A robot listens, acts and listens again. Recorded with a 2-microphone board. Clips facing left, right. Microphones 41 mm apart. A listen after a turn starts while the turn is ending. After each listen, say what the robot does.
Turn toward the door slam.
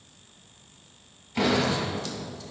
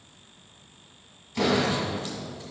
Turn 15° left.
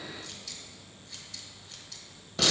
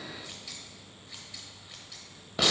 Keep listening.
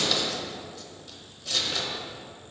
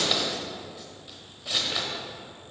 I heard a door slam, but can't make it out now. It was about straight ahead or 150° left.